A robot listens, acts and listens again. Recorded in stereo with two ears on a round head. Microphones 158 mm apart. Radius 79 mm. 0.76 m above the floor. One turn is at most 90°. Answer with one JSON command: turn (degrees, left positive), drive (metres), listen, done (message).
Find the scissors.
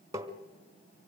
{"listen": true}
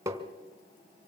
{"listen": true}
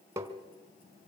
{"done": "I can't make out scissors to turn to."}